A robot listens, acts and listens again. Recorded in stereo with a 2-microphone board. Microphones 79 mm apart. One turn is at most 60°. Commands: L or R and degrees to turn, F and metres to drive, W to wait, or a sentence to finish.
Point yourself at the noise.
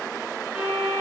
R30
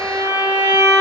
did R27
R60
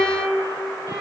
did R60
R60
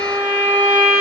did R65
R20
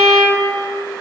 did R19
Facing the violin.